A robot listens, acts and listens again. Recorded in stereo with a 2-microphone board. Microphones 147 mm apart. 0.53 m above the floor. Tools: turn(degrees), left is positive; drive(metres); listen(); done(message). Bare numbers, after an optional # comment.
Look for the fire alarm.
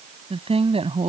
listen()
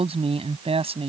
listen()
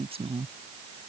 done("I can't make out a fire alarm to turn to.")